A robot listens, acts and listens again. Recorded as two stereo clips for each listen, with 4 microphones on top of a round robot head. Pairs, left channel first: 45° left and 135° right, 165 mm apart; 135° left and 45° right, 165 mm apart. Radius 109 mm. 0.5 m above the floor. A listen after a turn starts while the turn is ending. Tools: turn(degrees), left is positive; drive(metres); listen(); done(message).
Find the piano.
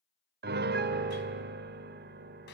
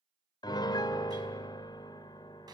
turn(degrees=-155)
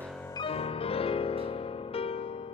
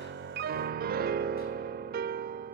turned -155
turn(degrees=-15)
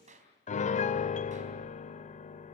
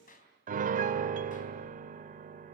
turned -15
done("Facing the piano.")